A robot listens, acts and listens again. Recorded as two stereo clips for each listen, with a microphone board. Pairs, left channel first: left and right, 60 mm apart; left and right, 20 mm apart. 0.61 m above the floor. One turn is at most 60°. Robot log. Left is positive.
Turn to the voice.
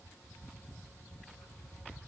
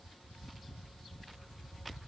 cmd idle
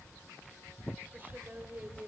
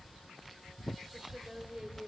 note: The woman speaking: about 35° right or 145° right.
cmd yaw -35
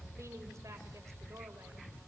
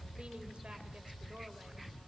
cmd idle
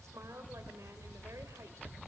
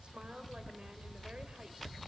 note: So it is at 110° right.
cmd yaw -60
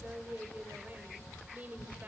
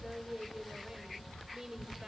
note: The woman speaking is now 35° right.
cmd yaw -35
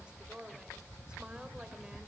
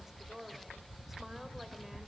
note: The woman speaking is now 20° right.
cmd yaw -20
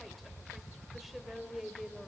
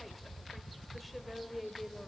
end: Facing the woman speaking, 2 to 4 m away.